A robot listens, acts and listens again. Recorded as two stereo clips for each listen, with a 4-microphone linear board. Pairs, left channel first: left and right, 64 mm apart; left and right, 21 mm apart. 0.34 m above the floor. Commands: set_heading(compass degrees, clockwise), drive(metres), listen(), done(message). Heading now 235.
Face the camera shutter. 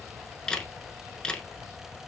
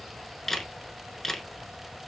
set_heading(205)
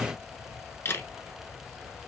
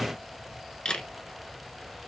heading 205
set_heading(65)
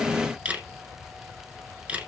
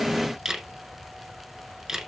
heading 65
set_heading(90)
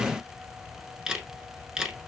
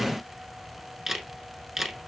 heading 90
set_heading(100)
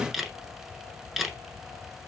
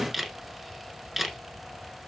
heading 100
done("Found it: a camera shutter, straight ahead.")